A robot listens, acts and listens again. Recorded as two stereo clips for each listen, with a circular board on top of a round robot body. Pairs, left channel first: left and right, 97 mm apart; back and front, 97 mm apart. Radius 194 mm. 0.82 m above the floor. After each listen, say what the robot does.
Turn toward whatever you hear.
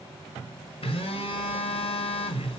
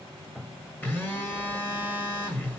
Turn 110° left.
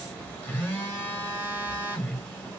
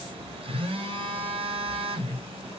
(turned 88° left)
Turn 20° left.
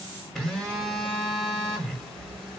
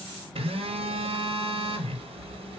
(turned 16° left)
Facing the phone buzzing, 1 to 2 m away.